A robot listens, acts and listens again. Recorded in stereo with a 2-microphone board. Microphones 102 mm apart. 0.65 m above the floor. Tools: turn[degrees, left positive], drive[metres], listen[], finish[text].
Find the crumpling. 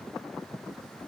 Action: listen[]
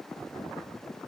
Action: listen[]
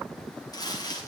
Thought: The crumpling: about 40° left or 140° left.
Action: turn[40]
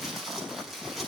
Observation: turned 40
Action: finish[Found it: crumpling, straight ahead.]